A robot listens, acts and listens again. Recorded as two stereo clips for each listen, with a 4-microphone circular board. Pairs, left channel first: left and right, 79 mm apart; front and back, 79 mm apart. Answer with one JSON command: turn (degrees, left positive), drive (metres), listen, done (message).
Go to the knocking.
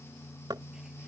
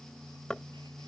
{"turn": -80}
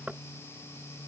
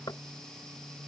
{"turn": -20}
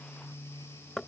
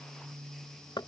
{"drive": 1.0}
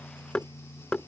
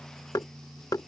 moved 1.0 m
{"turn": 15}
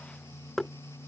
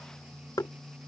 {"drive": 1.0}
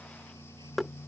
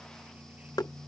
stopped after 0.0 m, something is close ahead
{"done": "I am next to the knocking."}